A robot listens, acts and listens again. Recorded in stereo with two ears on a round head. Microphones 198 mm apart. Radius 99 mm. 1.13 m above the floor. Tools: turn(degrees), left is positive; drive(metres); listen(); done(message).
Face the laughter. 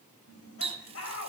turn(degrees=70)
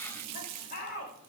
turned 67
turn(degrees=40)
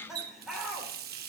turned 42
done("Found it: laughter, straight ahead, 2 to 4 m away.")